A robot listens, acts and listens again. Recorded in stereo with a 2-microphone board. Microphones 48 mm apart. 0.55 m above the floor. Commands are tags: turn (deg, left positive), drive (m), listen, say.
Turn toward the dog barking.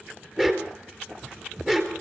<turn deg="-30"/>
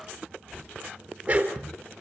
<turn deg="-145"/>
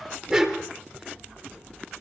<turn deg="-10"/>
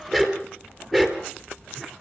<say>Found it: a dog barking, straight ahead.</say>